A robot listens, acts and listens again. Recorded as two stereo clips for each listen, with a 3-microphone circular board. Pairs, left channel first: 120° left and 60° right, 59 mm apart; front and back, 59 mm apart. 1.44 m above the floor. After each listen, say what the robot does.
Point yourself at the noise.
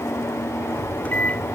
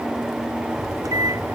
Turn 175° right.
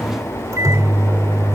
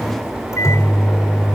Turn 30° right.
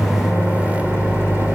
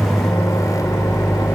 Found it: a microwave, straight ahead.